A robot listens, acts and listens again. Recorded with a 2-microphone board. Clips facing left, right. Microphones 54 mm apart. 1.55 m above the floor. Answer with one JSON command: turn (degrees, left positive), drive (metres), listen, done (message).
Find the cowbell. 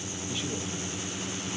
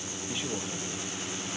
{"listen": true}
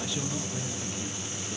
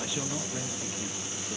{"listen": true}
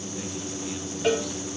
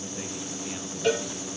{"turn": 30}
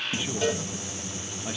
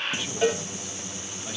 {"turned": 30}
{"turn": -20}
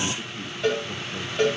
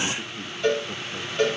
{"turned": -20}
{"done": "Facing the cowbell, 2 to 4 m away."}